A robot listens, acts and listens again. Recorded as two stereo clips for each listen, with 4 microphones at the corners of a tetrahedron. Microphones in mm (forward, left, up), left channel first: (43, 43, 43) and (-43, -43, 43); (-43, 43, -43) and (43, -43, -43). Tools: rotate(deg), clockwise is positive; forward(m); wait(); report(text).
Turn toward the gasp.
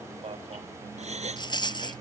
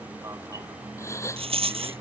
rotate(160)
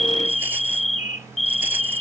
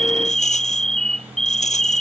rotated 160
report("Facing where the gasp came from. I can't hear it now.")